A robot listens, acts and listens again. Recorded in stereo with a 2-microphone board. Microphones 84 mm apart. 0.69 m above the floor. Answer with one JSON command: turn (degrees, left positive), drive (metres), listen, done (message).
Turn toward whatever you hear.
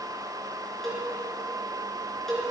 {"turn": 30}
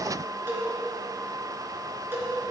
{"turn": -25}
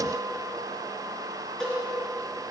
{"turn": 10}
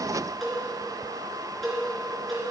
{"done": "Facing the cowbell."}